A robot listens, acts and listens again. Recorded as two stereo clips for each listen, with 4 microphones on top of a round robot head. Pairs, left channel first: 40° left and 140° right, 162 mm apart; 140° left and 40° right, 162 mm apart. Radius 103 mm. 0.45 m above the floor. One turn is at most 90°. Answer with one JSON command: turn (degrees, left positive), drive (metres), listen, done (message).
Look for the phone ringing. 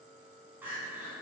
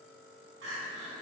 {"listen": true}
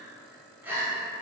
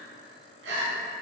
{"listen": true}
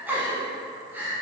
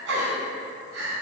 {"done": "I can't make out a phone ringing, only crying."}